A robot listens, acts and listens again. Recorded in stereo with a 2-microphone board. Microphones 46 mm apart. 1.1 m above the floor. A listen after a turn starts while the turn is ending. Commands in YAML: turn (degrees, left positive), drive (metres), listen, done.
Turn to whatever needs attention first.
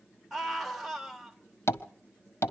turn: -30
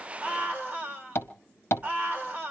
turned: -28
turn: -145
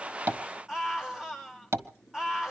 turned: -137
turn: -10
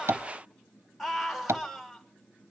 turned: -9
done: "Facing the scream, over 4 m away."